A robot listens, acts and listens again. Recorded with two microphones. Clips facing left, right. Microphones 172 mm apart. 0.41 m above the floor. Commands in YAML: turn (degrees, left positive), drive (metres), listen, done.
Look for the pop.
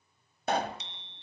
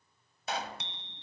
turn: 50
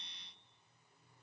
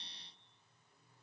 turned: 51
listen: true
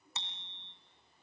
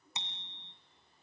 done: "I heard a pop, but can't make it out now. It was about straight ahead or 80° left."